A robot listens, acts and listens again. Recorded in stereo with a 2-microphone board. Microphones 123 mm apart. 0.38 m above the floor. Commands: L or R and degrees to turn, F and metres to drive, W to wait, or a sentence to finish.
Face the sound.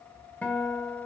L30
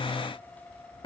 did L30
L135
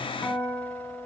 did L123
L15
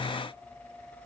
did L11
W
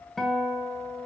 Facing the guitar, 2 to 4 m away.